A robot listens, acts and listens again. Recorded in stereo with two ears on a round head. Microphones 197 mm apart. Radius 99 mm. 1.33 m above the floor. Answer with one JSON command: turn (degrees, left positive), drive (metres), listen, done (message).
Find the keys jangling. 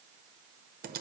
{"listen": true}
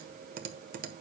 {"listen": true}
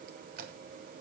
{"done": "I can't make out keys jangling to turn to."}